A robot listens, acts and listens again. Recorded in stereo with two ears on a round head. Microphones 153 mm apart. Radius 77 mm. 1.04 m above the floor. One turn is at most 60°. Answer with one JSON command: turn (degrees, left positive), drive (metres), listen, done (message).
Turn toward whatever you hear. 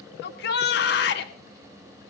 {"turn": 60}
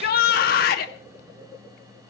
{"turn": 60}
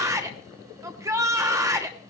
{"turn": -20}
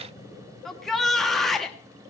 {"done": "Found it: a shout, straight ahead, 1 to 2 m away."}